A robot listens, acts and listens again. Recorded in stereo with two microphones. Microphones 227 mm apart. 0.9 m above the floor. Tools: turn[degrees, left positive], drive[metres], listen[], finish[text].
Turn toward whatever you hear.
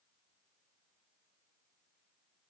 Action: listen[]
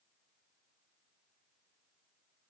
Action: listen[]
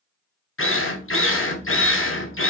Thought: The drill: about 65° left or 115° left.
Action: turn[65]
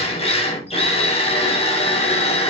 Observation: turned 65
Thought: So it is at 30° left.
Action: turn[30]
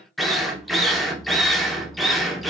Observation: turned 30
Action: finish[Found it: a drill, straight ahead.]